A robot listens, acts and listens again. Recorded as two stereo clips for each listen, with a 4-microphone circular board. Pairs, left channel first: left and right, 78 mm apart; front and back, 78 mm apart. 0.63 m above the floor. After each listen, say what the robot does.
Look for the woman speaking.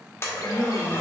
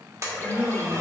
Turn 120° right.
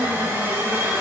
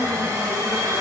Keep listening.
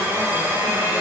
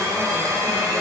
Keep listening.
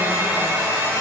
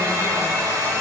I heard a woman speaking from this way, but can't make it out now.